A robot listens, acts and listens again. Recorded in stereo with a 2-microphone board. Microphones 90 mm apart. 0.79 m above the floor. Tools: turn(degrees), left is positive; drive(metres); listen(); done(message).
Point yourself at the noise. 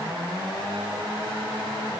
listen()
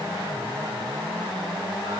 listen()
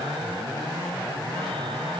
done("I can't make out anything to turn to.")